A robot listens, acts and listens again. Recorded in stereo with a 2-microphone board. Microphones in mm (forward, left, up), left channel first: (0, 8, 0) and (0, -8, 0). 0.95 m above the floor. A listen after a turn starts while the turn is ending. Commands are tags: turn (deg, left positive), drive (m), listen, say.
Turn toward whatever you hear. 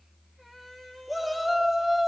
<turn deg="-30"/>
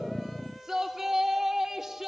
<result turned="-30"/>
<turn deg="-145"/>
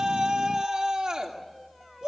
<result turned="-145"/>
<turn deg="-55"/>
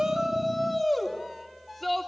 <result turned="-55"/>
<turn deg="10"/>
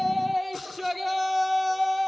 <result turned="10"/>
<say>Found it: a shout, straight ahead, 2 to 4 m away.</say>